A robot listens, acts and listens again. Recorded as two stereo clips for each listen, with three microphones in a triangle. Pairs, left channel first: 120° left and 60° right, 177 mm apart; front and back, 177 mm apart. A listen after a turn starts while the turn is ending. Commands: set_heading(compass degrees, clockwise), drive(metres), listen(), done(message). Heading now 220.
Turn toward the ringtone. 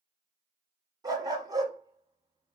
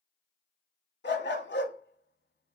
listen()
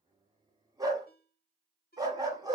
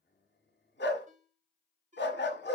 set_heading(85)
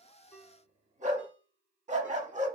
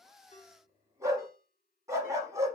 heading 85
listen()
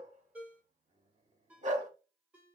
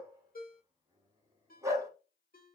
set_heading(65)
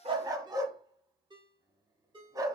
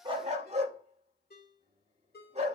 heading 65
done("Facing the ringtone, 1 to 2 m away.")